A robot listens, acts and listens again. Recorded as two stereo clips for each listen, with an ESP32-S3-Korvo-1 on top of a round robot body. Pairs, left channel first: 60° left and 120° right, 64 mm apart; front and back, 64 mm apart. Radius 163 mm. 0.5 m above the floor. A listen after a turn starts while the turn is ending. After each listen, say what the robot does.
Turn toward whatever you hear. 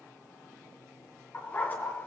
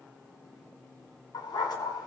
Facing the dog barking.